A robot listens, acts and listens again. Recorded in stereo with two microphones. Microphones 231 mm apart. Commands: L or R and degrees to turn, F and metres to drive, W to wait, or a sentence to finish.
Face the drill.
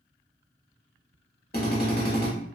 L45
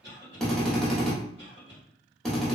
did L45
Facing the drill, under 1 m away.